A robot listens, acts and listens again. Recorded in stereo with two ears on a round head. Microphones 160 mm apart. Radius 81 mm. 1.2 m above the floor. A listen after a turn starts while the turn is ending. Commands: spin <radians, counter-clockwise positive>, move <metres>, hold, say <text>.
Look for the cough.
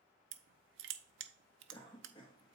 spin 0.52
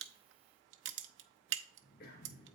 spin 2.09
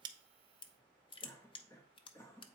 spin 0.26
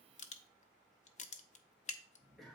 say Found it: a cough, straight ahead, 1 to 2 m away.